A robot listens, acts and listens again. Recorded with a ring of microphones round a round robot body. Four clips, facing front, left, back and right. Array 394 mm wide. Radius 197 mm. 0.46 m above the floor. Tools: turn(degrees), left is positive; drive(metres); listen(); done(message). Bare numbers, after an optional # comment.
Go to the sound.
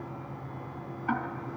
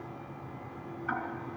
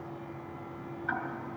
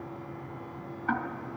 # The ticking: 50° right.
turn(-50)
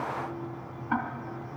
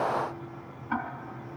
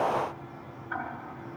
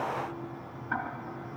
# The ticking is now 15° left.
turn(15)
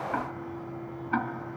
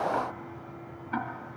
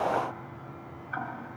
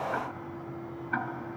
drive(1.0)
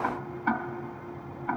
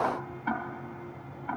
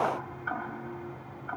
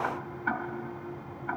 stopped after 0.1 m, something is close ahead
done("Blocked. The ticking is further on, straight ahead.")